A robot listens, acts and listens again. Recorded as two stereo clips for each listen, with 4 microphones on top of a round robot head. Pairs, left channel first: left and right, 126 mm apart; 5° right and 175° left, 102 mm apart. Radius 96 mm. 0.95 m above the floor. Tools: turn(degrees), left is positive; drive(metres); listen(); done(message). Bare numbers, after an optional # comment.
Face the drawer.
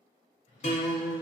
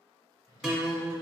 # The drawer: 45° left.
turn(45)
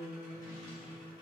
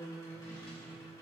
listen()
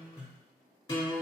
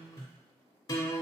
listen()
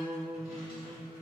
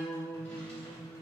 done("Facing where the drawer came from. I can't hear it now.")